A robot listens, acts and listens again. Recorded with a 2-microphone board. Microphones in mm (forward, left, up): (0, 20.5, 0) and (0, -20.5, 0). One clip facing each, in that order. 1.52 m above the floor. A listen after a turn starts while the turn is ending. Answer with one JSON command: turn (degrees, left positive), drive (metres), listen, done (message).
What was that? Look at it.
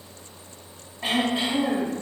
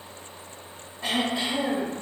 {"turn": 15}
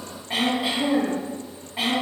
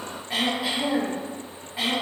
{"done": "Facing the throat clearing."}